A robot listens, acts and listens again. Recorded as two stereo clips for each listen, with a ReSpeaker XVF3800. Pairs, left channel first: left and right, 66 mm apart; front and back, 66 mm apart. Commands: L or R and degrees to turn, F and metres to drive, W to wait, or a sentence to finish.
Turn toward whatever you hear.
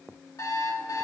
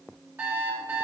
L120
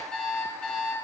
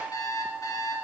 L20
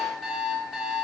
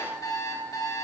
Found it: an alarm clock, straight ahead, 2 to 4 m away.